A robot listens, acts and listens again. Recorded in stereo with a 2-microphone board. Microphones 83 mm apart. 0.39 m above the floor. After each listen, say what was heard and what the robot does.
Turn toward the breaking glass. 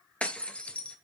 Turn 30° left.
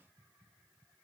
Keep listening.
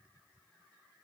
I heard breaking glass, but can't make it out now. It was about 15° right or 135° left.